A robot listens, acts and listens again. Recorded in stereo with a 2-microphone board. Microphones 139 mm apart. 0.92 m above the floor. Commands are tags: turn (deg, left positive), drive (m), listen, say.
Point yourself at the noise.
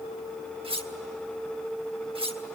<turn deg="-45"/>
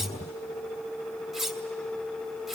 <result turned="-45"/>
<say>Facing the cutlery clinking.</say>